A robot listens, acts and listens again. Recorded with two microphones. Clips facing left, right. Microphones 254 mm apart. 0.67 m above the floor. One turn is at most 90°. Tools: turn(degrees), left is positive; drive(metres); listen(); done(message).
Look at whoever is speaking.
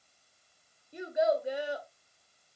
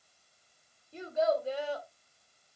turn(degrees=30)
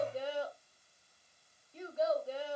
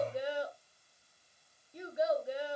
turn(degrees=-15)
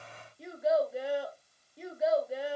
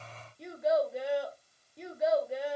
done("Found it: a child speaking, straight ahead.")